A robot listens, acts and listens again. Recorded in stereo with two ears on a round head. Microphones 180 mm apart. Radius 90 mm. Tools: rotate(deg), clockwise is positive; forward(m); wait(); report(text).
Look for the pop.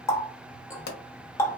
rotate(-50)
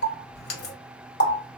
wait()
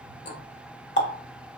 report("I heard a pop, but can't make it out now. It was about straight ahead or 80° left.")